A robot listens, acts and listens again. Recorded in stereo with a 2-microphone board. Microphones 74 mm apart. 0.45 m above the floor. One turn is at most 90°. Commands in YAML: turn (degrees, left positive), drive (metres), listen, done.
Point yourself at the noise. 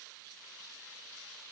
listen: true
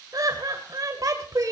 turn: -50
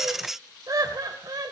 turn: -60
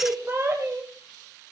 turn: -40
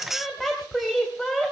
done: "Facing the laughter, 2 to 4 m away."